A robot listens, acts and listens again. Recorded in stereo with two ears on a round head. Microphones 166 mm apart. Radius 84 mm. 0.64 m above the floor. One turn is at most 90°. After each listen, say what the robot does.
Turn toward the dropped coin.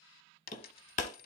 Turn 50° left.
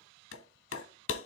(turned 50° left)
Keep listening.
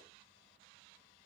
I heard a dropped coin, but can't make it out now. It was about straight ahead or 80° left.